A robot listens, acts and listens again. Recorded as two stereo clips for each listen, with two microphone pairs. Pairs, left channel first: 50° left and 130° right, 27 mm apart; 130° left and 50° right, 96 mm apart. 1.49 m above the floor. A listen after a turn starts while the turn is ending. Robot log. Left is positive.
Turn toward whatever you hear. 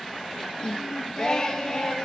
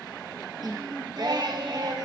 note: The singing: 15° right.
cmd yaw -15
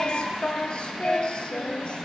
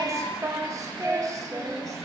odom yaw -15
end: Facing the singing.